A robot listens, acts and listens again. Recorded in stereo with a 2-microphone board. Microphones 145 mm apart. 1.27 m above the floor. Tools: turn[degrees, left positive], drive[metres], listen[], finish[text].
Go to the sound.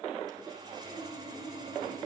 Thought: The sawing: about 25° right or 155° right.
Action: turn[-25]
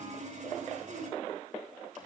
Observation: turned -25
Thought: So it is at 125° right.
Action: turn[-125]
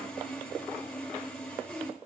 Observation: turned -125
Action: drive[1.0]
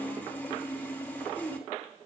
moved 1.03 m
Thought: The sawing is now 10° left.
Action: turn[10]
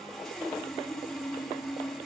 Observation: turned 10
Action: drive[1.0]
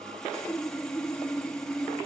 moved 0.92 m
Action: drive[1.0]
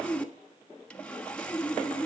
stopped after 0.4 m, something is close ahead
Thought: The sawing is now 10° left.
Action: turn[10]
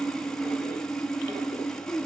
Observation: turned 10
Action: finish[Arrived at the sawing, straight ahead.]